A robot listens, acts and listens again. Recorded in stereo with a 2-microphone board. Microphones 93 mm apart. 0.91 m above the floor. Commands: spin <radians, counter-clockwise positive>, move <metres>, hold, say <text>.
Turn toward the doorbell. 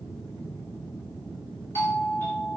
spin 0.35
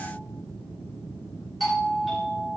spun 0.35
say Facing the doorbell.